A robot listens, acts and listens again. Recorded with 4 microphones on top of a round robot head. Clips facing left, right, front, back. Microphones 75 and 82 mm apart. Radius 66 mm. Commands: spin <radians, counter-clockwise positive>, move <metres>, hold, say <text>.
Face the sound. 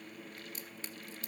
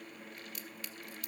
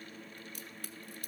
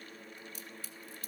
spin 0.52
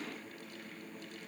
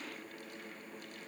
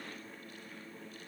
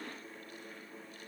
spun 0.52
say Facing where the crack came from. I can't hear it now.